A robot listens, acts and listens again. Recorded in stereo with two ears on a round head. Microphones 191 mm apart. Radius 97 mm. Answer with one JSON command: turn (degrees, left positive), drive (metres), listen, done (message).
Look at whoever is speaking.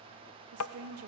{"turn": -75}
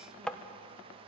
{"listen": true}
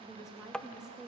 {"done": "Found it: a woman speaking, straight ahead."}